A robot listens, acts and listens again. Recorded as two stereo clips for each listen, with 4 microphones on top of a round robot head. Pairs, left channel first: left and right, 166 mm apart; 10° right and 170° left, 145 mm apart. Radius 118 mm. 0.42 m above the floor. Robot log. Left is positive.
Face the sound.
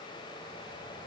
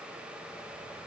cmd idle
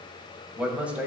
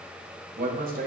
note: The man speaking: 175° right.
cmd yaw -175
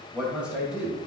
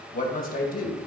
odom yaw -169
end: Found it: a man speaking, straight ahead.